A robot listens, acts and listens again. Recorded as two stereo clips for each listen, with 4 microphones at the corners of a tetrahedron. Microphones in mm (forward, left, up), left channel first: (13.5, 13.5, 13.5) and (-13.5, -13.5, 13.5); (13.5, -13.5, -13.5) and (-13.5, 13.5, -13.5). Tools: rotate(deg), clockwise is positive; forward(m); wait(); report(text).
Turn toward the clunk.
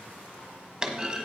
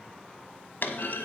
rotate(65)
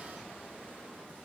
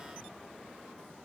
report("I heard a clunk from this way, but can't make it out now.")